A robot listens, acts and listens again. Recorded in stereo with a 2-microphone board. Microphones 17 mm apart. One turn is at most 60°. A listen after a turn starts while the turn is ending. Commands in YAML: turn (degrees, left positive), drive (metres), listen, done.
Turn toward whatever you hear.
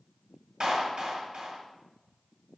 turn: -50
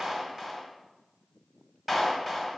turn: -15
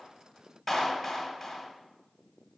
done: "Found it: a clap, straight ahead, 2 to 4 m away."